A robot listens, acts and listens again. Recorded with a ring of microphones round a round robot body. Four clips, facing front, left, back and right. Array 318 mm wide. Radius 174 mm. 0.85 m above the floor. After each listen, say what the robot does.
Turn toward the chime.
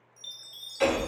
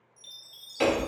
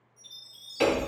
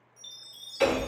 Facing the chime, 1 to 2 m away.